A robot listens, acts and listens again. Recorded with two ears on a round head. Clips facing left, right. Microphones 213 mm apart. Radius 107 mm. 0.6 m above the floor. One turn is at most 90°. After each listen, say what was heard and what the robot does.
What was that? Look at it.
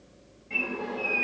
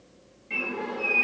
The bird: about 25° right or 155° right. Turn 25° right.
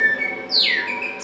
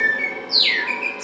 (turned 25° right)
Found it: a bird, straight ahead.